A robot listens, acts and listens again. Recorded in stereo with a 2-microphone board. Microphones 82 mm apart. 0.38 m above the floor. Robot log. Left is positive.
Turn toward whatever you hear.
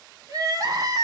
note: The crying: about 50° right or 130° right.
cmd yaw -50
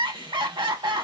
note: So it is at 80° right.
cmd yaw -80
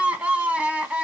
note: The crying is now 15° right.
cmd yaw -15
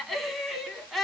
end: Facing the crying.